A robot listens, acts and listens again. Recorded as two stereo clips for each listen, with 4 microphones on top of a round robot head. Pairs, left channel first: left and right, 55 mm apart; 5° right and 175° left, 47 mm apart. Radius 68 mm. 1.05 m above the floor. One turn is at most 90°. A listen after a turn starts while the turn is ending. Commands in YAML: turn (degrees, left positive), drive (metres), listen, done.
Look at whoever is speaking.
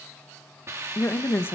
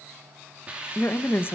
turn: 35
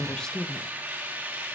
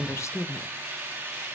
turn: 10
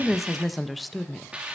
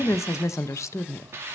done: "Facing the woman speaking, under 1 m away."